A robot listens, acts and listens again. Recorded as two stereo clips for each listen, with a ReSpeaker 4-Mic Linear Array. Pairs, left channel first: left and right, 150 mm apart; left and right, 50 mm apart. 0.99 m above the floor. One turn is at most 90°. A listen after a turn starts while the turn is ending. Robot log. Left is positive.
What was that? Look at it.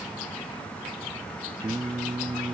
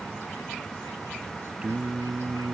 note: The singing: about 25° right or 155° right.
cmd yaw -25
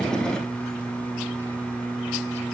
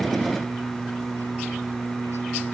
end: Facing the singing.